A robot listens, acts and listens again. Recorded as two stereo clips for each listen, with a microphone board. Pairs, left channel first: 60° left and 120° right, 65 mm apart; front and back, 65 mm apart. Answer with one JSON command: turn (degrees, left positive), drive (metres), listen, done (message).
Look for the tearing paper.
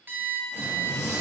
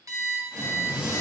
{"turn": 105}
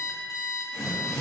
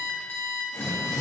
{"turn": -25}
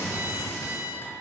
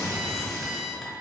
{"done": "Found it: tearing paper, straight ahead."}